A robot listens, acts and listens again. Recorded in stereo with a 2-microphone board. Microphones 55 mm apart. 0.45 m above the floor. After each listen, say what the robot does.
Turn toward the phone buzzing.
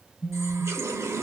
Turn 15° left.
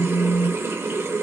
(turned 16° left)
Turn 150° left.
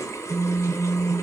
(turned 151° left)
Found it: a phone buzzing, straight ahead, 1 to 2 m away.